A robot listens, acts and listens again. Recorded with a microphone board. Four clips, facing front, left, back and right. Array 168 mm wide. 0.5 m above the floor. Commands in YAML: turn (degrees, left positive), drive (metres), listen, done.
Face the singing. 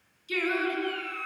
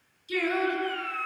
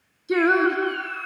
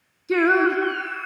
turn: -120
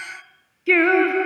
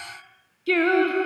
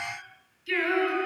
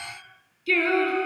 turn: 25
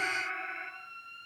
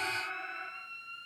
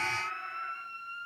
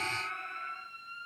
turn: 30
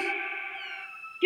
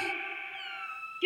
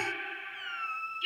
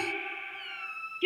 done: "Facing the singing."